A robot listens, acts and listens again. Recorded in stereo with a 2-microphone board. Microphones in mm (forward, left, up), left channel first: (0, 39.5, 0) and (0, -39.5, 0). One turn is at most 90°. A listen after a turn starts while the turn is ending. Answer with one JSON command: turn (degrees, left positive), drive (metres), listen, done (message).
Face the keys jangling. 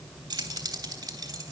{"turn": -50}
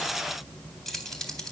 {"done": "Facing the keys jangling."}